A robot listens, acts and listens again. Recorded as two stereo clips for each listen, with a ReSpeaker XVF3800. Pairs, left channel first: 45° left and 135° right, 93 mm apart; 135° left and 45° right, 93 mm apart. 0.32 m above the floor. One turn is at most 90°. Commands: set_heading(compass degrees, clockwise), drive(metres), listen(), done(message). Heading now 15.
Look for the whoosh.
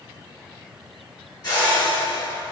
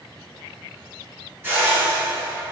set_heading(0)
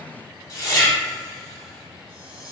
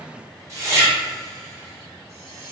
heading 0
done("Facing the whoosh, under 1 m away.")